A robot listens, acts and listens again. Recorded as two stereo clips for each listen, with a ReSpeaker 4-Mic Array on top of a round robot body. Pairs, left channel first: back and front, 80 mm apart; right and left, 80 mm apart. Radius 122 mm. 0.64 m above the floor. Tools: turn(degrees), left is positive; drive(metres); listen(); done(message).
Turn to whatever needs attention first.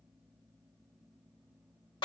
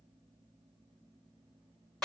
listen()
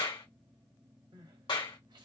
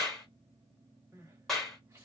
turn(degrees=30)
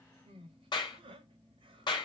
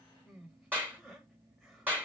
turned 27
done("Facing the crying, 1 to 2 m away.")